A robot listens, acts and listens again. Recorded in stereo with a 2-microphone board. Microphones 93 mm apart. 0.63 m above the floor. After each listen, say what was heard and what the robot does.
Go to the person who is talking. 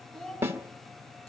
Turn 30° left.
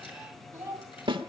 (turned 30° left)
So it is at 25° right. Turn 25° right.
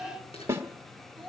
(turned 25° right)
Drive 1.0 m forward.
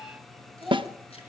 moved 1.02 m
Drive 1.0 m forward.
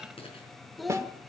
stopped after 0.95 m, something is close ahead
I am next to the child speaking.